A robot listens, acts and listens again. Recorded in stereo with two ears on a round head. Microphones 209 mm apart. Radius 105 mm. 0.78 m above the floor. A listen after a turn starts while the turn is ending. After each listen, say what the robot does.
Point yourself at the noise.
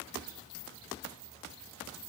Keep listening.
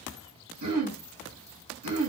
Turn 90° right.
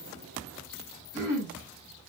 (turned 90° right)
Turn 10° left.
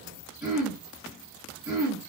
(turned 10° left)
Facing the throat clearing.